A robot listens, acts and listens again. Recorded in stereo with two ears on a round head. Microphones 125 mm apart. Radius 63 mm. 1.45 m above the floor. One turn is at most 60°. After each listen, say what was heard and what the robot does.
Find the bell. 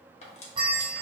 The bell: about 35° right or 145° right. Turn 35° right.
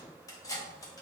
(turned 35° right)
Keep listening.
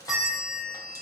Facing the bell.